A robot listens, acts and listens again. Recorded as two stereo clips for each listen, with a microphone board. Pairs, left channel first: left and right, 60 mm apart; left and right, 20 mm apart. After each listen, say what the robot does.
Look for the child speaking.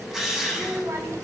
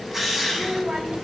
Turn 55° right.
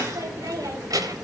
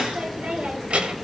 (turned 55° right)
Turn 85° right.
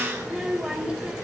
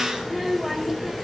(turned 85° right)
Turn 15° right.
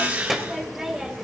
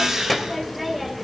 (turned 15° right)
Facing the child speaking.